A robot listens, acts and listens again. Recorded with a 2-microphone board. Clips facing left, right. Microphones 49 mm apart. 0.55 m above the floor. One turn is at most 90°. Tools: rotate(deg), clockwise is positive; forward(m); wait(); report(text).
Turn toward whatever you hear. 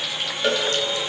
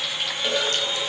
rotate(-90)
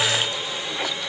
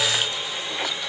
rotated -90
wait()
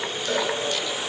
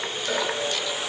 rotate(10)
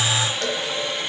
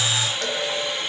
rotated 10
report("Facing the cowbell, over 4 m away.")